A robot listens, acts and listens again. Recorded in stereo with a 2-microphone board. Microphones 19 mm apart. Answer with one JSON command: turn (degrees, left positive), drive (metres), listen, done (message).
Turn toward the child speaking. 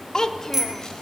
{"turn": 30}
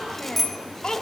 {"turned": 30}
{"turn": 135}
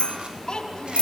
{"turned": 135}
{"turn": 50}
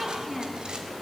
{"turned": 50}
{"done": "Facing the child speaking."}